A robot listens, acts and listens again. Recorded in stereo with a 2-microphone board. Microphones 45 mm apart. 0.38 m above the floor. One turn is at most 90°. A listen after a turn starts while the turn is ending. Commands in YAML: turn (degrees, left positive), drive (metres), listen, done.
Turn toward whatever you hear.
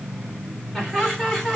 turn: 30
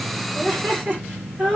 turn: -35
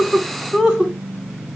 done: "Facing the laughter, 2 to 4 m away."